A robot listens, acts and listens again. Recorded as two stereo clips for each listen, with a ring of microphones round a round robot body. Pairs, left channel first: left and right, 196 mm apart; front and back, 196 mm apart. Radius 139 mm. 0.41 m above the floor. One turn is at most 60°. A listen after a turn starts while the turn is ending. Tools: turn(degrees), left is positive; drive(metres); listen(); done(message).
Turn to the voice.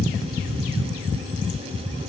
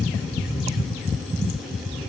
listen()
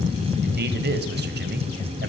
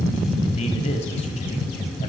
turn(degrees=-60)
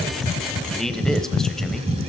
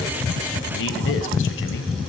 done("Facing the man speaking, 1 to 2 m away.")